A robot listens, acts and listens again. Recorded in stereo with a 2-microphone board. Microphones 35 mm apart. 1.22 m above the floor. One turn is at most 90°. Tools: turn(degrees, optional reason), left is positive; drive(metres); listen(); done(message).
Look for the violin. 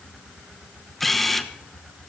listen()
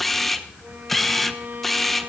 turn(degrees=-70, reason="The violin: about 70° right or 110° right.")
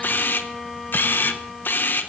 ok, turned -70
done("Facing the violin, over 4 m away.")